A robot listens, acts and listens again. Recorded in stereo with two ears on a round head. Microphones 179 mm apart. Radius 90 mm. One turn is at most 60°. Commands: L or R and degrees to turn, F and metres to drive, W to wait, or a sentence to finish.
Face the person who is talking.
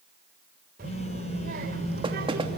R50
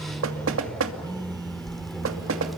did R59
Facing the child speaking.